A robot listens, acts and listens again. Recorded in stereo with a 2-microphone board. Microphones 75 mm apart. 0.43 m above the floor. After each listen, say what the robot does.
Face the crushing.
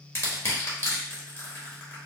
Turn 35° left.
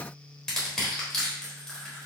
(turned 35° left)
Turn 10° left.
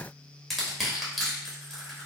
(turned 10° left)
Facing the crushing, 1 to 2 m away.